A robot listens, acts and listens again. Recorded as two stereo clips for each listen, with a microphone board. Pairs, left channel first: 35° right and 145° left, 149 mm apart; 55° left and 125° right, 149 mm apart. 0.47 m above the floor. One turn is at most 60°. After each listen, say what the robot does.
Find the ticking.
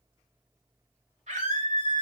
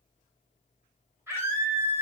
Keep listening.
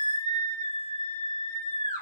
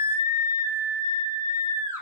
Keep listening.
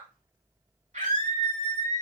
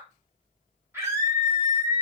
I can't make out ticking, only a scream.